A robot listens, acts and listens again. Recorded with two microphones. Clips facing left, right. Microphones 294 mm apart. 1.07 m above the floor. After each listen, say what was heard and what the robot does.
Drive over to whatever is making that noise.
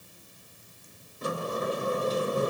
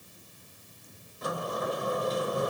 The sliding door: about 30° left or 150° left. Turn 30° left.
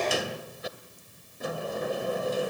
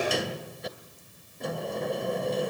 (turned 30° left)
Drive 1.0 m forward.
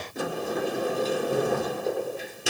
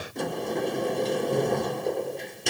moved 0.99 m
Drive 1.0 m forward.
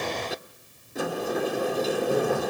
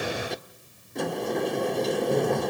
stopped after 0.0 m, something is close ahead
I am next to the sliding door.